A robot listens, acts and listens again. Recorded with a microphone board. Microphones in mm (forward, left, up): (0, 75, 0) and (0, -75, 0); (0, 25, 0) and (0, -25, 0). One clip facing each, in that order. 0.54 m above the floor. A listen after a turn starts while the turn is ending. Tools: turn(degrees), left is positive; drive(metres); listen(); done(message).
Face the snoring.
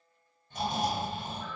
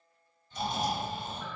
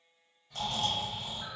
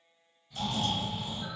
turn(degrees=60)
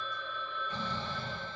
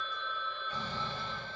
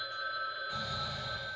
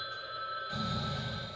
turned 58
turn(degrees=25)
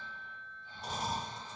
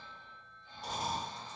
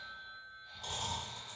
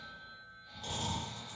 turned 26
done("Found it: snoring, straight ahead.")